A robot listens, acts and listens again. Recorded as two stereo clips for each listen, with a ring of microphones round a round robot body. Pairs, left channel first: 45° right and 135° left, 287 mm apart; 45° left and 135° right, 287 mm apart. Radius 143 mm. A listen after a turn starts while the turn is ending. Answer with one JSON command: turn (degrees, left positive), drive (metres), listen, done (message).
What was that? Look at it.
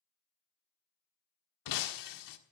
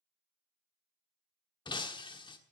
{"turn": -30}
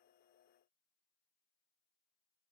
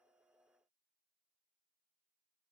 {"done": "I heard breaking glass from this way, but can't make it out now."}